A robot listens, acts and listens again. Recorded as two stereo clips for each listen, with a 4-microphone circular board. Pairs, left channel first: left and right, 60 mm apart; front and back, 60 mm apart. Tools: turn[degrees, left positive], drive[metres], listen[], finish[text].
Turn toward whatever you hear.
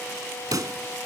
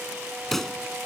Thought: The pop: 85° right.
Action: turn[-85]
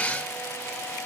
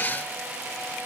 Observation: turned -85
Action: finish[I heard a pop from this way, but can't make it out now.]